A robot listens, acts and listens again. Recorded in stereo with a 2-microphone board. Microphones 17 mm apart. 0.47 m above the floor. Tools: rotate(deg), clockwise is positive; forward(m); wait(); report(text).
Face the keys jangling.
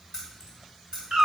rotate(40)
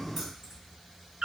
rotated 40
rotate(15)
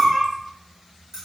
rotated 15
rotate(25)
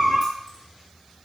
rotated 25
wait()
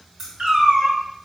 rotate(20)
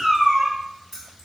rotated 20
report("Found it: keys jangling, straight ahead, 2 to 4 m away.")